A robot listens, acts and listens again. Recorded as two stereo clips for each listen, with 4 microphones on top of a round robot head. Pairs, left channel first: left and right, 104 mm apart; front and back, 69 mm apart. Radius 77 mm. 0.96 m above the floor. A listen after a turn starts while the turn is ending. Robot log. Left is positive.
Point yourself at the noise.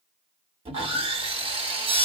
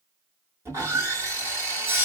note: The sawing: 125° right.
cmd yaw -125
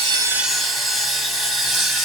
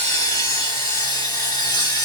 end: Facing the sawing.